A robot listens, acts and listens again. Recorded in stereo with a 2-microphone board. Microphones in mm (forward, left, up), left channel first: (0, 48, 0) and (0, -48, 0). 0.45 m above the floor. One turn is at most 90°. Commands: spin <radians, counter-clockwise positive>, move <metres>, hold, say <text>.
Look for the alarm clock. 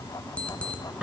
spin 0.52
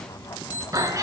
spin 1.57
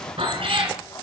spin 0.87
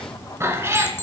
spin 0.44
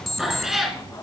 say Found it: an alarm clock, straight ahead.